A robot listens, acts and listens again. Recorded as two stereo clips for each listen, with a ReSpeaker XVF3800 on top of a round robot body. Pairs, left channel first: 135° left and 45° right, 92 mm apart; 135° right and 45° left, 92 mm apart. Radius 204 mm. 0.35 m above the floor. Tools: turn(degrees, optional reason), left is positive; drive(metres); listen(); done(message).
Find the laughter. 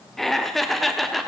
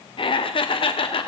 turn(degrees=-135, reason="The laughter: 135° right.")
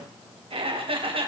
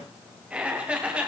turn(degrees=-30, reason="The laughter is now 30° right.")
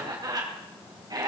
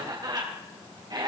done("Facing the laughter, 2 to 4 m away.")